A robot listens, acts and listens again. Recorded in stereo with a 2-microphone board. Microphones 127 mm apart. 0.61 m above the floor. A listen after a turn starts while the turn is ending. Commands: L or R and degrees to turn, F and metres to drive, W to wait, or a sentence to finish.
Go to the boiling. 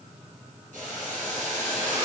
R90
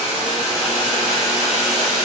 F1.0
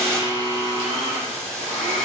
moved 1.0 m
L10
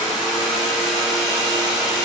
W
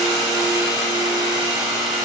W
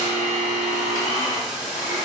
F1.0
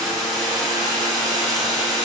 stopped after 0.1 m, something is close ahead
Arrived at the boiling, straight ahead.